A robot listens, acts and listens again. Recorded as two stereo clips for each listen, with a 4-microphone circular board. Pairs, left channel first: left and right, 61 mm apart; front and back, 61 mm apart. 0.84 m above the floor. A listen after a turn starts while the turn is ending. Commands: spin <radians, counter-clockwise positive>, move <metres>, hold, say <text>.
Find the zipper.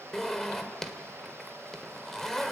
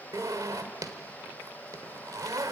spin 3.05
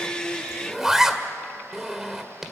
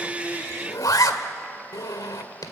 say Facing the zipper.